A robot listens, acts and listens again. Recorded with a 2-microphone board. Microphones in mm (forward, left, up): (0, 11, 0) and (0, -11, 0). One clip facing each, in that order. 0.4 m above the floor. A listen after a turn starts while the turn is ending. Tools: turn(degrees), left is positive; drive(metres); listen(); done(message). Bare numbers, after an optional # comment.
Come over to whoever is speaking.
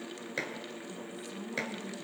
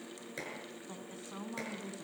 # The woman speaking: about 35° right or 145° right.
turn(-35)
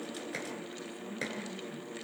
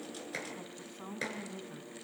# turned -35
# So it is at 105° right.
turn(-105)
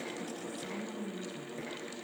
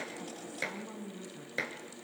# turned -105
drive(1.0)
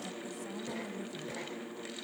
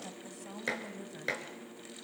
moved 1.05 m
# The woman speaking is now 10° right.
turn(-10)
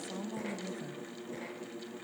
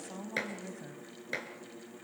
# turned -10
drive(1.0)
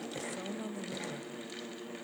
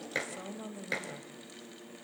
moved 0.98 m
drive(1.0)
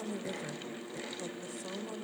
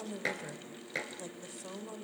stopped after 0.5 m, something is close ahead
done("Arrived at the woman speaking, straight ahead.")